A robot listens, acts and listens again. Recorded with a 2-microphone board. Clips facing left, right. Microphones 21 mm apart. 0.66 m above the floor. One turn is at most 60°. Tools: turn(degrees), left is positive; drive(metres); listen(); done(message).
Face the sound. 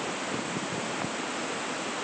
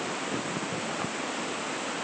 listen()
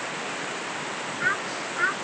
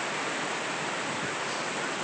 turn(degrees=60)
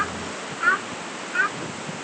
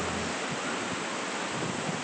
turn(degrees=60)
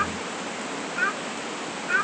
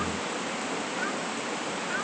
turn(degrees=35)
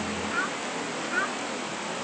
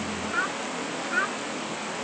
turn(degrees=-10)
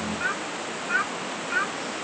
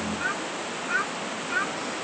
done("Facing the child speaking.")